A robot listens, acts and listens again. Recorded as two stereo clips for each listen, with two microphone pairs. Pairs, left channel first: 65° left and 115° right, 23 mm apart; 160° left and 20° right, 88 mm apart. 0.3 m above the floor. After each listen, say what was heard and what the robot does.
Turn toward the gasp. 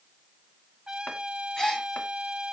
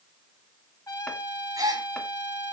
The gasp: 15° left. Turn 15° left.
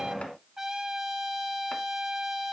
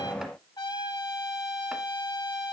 I heard a gasp from this way, but can't make it out now.